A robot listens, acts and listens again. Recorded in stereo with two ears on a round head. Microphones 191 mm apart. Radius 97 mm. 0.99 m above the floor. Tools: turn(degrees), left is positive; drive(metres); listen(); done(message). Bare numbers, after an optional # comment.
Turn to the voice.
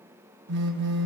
listen()
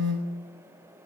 listen()
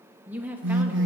turn(-30)
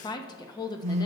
# So it is at 20° left.
turn(20)
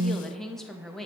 done("Facing the woman speaking, under 1 m away.")